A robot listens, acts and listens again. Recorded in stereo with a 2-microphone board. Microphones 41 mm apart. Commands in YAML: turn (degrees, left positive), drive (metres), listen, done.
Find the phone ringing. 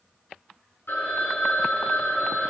turn: 65
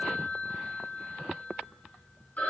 turn: 45
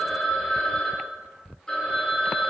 turn: 20
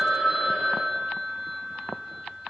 done: "Facing the phone ringing."